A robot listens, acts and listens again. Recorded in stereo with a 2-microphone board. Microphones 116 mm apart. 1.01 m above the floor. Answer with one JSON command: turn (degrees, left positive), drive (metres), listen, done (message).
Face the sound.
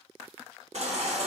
{"turn": -65}
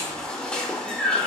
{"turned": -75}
{"turn": 10}
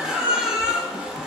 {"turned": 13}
{"done": "Found it: a baby crying, straight ahead, under 1 m away."}